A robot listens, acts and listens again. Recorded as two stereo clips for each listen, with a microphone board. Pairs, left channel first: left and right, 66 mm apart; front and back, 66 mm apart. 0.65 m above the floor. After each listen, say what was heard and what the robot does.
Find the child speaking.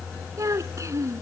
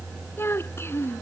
The child speaking: 50° right. Turn 50° right.
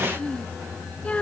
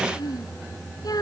The child speaking is now 20° left. Turn 20° left.
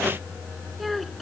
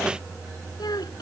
Facing the child speaking.